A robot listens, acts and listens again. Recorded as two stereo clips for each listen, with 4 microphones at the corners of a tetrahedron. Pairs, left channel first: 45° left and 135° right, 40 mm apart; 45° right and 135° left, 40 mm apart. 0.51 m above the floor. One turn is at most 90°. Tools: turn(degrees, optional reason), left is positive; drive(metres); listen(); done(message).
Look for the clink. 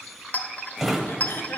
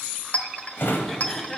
done("Found it: a clink, straight ahead.")